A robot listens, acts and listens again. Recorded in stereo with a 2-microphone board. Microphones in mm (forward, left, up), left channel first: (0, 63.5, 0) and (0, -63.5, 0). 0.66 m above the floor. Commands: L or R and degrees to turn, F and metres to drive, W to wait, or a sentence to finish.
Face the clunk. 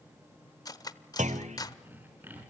R70
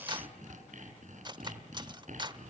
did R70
W
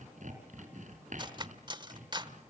I heard a clunk, but can't make it out now. It was about straight ahead or 40° right.